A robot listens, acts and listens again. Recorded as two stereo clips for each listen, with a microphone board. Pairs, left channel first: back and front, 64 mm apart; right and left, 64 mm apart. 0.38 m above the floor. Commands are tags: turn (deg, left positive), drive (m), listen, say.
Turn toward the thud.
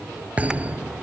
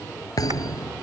<turn deg="-70"/>
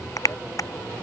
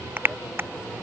<say>Facing where the thud came from. I can't hear it now.</say>